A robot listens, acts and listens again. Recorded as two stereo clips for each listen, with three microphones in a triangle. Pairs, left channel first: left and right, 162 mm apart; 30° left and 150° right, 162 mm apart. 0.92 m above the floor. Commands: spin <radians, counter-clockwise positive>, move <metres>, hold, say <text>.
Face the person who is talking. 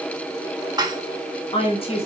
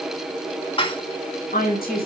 spin 0.70
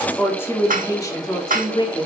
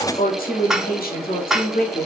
spin 0.61
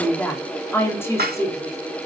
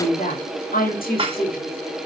spin 0.35
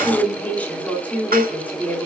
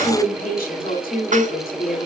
spin 0.17
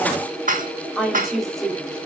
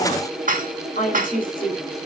say Facing the woman speaking, 2 to 4 m away.